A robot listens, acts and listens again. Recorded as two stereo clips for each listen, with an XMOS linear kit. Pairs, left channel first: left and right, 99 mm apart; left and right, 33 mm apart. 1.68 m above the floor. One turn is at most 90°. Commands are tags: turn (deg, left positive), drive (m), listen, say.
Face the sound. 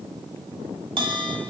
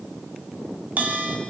<turn deg="-55"/>
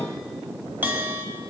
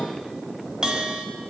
<turn deg="-25"/>
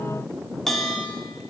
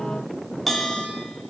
<say>Facing the bell, 1 to 2 m away.</say>